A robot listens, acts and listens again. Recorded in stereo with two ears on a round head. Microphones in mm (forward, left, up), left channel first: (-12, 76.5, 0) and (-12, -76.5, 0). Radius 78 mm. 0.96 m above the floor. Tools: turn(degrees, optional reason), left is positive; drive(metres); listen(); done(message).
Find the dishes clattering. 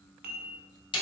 turn(degrees=-60, reason="The dishes clattering: about 60° right or 120° right.")
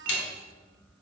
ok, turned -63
listen()
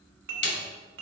turn(degrees=-60, reason="So it is at 60° right.")
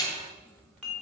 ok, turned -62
done("Found it: dishes clattering, straight ahead, 1 to 2 m away.")